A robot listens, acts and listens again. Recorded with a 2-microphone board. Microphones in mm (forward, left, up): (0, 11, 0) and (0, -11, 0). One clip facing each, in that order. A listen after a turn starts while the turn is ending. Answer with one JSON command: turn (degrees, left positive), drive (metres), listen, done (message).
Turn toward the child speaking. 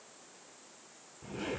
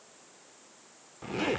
{"listen": true}
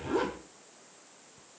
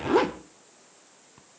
{"listen": true}
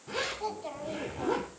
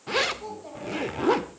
{"turn": 30}
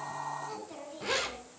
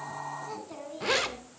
{"done": "Found it: a child speaking, straight ahead."}